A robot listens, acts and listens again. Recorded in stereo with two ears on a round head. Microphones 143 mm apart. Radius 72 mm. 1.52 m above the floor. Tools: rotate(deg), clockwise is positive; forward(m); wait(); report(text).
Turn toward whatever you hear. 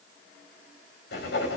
rotate(-70)
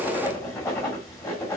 rotate(-20)
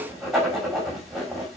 report("Facing the writing.")